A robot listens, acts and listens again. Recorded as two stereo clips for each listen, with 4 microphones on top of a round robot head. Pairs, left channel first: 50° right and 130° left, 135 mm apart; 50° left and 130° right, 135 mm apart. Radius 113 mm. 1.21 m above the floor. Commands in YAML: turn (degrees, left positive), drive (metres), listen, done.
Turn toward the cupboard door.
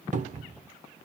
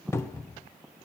turn: 120
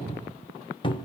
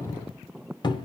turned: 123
done: "Found it: a cupboard door, straight ahead, 1 to 2 m away."